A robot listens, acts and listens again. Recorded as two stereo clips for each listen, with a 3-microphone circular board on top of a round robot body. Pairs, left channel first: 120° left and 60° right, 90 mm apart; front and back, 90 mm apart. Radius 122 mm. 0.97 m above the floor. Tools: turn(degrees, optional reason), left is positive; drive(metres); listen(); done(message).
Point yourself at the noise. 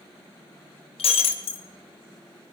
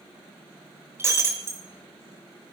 turn(degrees=115, reason="The breaking glass: 115° left.")
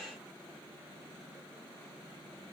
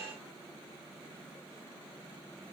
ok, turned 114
done("I heard breaking glass from this way, but can't make it out now.")